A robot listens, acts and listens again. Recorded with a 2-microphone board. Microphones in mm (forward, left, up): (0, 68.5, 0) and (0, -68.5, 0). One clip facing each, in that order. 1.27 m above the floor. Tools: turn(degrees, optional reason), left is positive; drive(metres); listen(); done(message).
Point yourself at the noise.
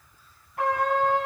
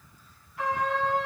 turn(degrees=60, reason="The trumpet: about 60° left or 120° left.")
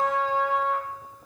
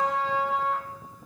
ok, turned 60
done("Found it: a trumpet, straight ahead.")